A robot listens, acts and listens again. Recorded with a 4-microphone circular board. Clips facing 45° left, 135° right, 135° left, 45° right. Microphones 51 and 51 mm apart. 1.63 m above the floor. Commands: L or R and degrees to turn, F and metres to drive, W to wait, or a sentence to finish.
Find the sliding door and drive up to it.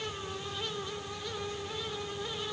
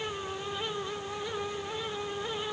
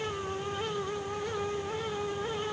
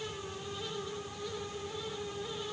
W
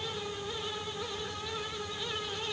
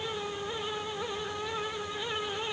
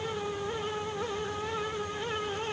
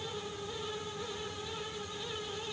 W
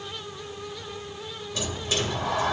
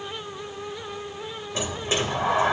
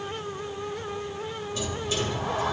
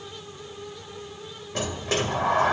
R75
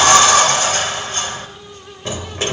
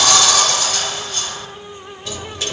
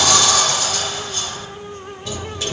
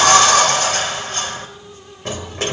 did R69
F1.0
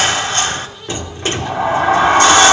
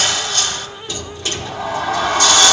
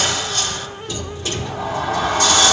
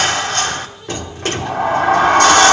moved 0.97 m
R10
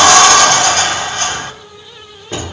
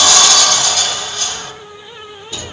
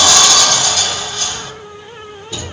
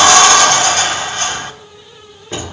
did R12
F1.0
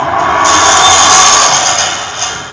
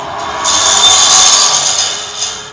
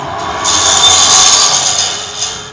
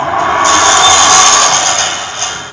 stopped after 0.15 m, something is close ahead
I am next to the sliding door.